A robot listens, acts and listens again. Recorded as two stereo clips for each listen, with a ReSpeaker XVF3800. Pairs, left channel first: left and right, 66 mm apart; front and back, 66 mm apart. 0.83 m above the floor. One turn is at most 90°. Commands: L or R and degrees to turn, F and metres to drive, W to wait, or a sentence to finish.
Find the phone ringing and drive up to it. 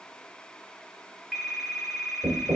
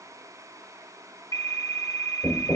R10
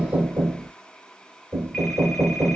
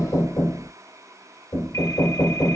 W
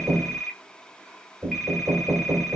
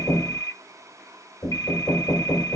F1.0
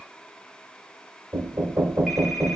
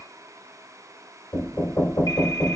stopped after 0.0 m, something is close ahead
W
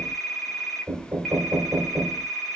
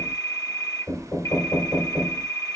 Something is in my way. I am facing the phone ringing but have not reached it.